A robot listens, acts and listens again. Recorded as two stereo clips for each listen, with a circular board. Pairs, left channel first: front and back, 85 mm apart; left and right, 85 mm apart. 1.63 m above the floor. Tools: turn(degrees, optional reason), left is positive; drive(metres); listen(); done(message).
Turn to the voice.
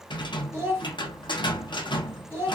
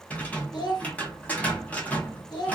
turn(degrees=120, reason="The child speaking: 120° left.")
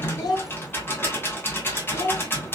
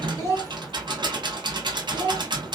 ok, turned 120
turn(degrees=40, reason="The child speaking is now 40° left.")
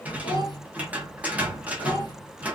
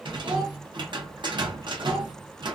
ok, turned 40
listen()
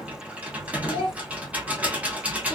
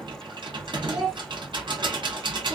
done("Facing the child speaking.")